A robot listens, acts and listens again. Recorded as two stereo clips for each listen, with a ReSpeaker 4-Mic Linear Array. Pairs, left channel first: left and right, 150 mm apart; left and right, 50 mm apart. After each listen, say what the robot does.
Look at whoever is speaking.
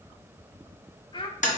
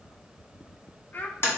Turn 35° left.
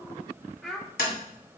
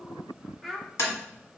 Found it: a child speaking, straight ahead.